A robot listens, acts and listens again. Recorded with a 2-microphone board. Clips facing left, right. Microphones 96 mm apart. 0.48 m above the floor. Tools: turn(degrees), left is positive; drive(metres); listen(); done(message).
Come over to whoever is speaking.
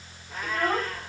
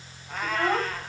turn(degrees=-20)
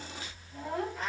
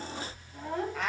drive(metres=1.0)
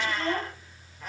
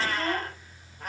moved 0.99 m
drive(metres=1.0)
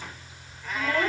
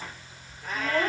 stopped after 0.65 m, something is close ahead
done("I am next to the child speaking.")